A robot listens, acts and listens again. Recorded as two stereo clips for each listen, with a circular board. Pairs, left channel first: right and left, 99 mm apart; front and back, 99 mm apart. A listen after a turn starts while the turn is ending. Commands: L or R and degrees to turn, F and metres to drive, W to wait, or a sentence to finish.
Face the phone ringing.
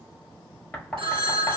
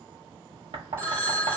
L120
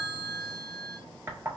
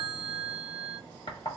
R45
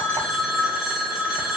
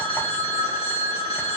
Found it: a phone ringing, straight ahead.